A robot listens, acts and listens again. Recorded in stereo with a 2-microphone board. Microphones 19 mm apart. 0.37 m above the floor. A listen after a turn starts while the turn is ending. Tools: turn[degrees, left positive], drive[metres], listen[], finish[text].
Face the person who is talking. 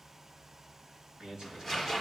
Thought: The man speaking: about 30° right or 150° right.
Action: turn[-30]
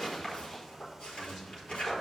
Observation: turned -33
Action: finish[Found it: a man speaking, straight ahead, over 4 m away.]